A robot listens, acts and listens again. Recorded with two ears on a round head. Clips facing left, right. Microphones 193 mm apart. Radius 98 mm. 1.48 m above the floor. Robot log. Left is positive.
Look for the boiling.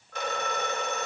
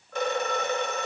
cmd idle
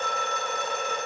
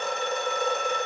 cmd idle
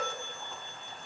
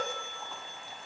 end: I can't make out boiling to turn to.